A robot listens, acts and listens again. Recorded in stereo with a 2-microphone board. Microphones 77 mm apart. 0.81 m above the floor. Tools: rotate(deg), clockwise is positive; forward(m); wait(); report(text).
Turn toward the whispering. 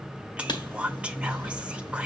rotate(30)
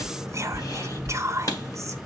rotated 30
rotate(135)
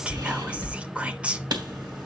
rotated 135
rotate(15)
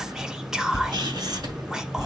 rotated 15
rotate(10)
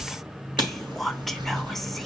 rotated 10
report("Found it: whispering, straight ahead.")